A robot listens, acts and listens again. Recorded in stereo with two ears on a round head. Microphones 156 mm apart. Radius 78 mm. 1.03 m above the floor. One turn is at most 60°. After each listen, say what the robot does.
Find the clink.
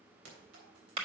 Turn 60° right.
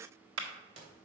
Turn 35° right.
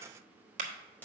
Turn 10° left.
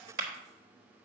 Keep listening.
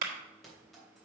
Facing the clink.